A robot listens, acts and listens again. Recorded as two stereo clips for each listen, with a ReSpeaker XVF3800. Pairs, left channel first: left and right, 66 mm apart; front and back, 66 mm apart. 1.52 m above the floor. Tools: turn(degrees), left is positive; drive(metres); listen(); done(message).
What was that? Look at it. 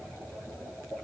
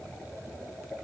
listen()
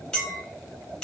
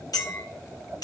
turn(degrees=10)
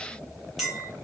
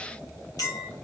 done("Found it: a clink, straight ahead, 1 to 2 m away.")